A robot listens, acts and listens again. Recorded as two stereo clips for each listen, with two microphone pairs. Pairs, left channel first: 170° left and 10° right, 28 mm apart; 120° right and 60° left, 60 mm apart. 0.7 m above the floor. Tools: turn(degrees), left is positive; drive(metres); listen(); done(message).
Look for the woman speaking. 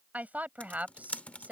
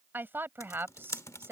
turn(degrees=10)
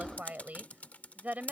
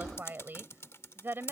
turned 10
turn(degrees=10)
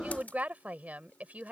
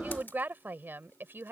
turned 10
turn(degrees=10)
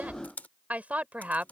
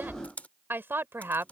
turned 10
turn(degrees=15)
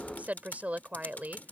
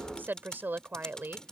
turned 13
done("Facing the woman speaking.")